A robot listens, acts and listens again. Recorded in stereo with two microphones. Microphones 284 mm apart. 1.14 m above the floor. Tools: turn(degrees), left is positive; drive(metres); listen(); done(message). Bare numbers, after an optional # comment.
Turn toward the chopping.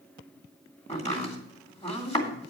# The chopping: about 20° left or 160° left.
turn(20)
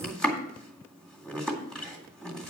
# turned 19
done("Facing the chopping.")